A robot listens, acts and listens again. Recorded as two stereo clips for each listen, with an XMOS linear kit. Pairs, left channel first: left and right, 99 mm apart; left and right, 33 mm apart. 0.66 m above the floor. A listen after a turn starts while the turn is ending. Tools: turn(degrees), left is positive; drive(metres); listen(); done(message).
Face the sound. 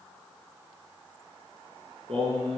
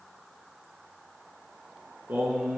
turn(degrees=-90)
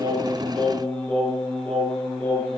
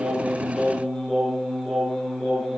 turn(degrees=10)
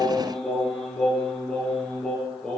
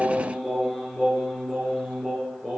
done("Facing the singing, over 4 m away.")